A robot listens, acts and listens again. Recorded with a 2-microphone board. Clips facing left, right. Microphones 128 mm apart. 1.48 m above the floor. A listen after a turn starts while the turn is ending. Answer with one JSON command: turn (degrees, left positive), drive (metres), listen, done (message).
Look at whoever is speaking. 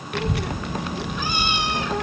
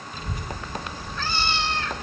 {"turn": 90}
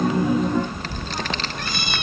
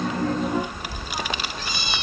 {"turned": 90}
{"turn": -10}
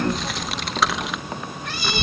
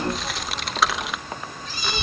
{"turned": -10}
{"done": "Facing the child speaking."}